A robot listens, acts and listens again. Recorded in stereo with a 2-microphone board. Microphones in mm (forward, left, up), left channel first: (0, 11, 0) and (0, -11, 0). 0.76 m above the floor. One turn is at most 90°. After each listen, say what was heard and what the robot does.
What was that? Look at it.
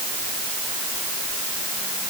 Keep listening.
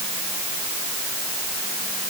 Keep listening.
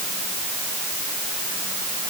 I can't make out anything to turn to.